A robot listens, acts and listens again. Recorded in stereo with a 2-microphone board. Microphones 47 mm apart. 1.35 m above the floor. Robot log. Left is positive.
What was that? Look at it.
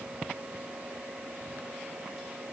cmd idle
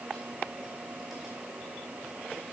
cmd idle
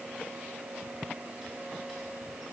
end: I can't make out anything.